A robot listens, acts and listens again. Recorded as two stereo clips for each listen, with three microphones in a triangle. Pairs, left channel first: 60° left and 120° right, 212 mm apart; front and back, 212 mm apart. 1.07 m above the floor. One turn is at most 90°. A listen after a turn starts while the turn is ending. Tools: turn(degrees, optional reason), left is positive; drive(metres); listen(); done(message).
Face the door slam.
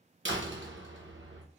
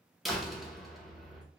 turn(degrees=-90, reason="The door slam: 90° right.")
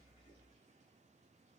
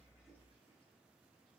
done("I heard a door slam from this way, but can't make it out now.")